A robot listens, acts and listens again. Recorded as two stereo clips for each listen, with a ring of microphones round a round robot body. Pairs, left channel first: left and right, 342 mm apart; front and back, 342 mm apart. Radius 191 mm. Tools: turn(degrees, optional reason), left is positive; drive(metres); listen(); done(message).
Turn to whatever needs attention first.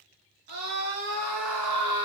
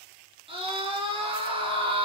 turn(degrees=-105, reason="The scream: 105° right.")
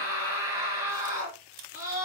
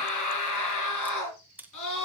turn(degrees=-35, reason="The scream is now 35° right.")
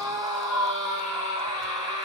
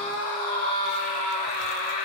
turn(degrees=-10, reason="The scream is now 10° right.")
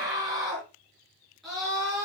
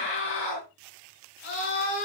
done("Found it: a scream, straight ahead, over 4 m away.")